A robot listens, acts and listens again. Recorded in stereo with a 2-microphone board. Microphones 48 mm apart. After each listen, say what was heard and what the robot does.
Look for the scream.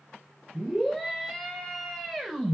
Turn 30° left.
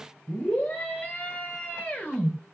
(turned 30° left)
So it is at 140° left. Turn 140° left.
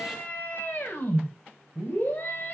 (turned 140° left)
The scream is now 35° left. Turn 35° left.
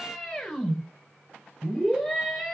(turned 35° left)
The scream is now 10° left. Turn 10° left.
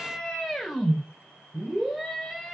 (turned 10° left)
Facing the scream, over 4 m away.